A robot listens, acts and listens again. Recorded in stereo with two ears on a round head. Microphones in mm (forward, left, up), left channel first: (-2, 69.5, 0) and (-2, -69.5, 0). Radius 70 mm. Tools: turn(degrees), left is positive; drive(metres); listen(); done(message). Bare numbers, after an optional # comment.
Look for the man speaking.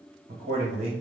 # The man speaking: about 65° right or 115° right.
turn(-65)
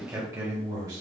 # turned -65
# So it is at 25° right.
turn(-25)
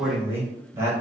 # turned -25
# The man speaking is now 20° right.
turn(-20)
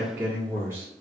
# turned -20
# The man speaking is now 20° right.
turn(-20)
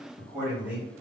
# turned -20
# The man speaking is now 10° right.
turn(-10)
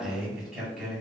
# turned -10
done("Found it: a man speaking, straight ahead, 2 to 4 m away.")